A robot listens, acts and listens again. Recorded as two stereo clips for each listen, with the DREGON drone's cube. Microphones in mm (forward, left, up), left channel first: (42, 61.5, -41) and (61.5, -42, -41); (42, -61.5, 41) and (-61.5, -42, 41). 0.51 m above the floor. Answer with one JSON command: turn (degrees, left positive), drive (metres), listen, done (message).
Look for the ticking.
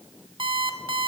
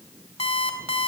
{"listen": true}
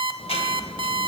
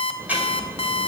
{"turn": 95}
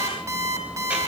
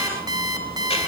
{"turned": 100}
{"done": "Facing the ticking."}